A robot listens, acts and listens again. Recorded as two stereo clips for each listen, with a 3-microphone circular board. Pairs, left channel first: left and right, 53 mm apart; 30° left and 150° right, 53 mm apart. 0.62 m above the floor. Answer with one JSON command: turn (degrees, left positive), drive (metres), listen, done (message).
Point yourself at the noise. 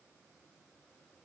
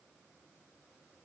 {"listen": true}
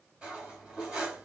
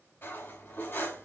{"turn": -15}
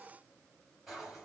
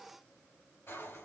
{"done": "Found it: cutlery clinking, straight ahead, 1 to 2 m away."}